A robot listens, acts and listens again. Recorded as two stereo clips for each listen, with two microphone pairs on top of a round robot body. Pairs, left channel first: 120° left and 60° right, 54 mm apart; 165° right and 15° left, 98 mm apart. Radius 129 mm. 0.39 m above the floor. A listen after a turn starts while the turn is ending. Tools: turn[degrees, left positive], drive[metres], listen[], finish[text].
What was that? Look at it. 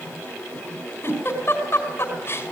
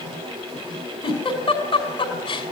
Thought: The giggle: 165° left.
Action: turn[165]
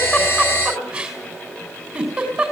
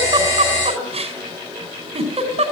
Thought: The giggle is now 20° left.
Action: turn[20]
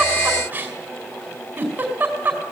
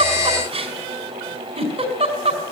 Action: finish[Found it: a giggle, straight ahead, over 4 m away.]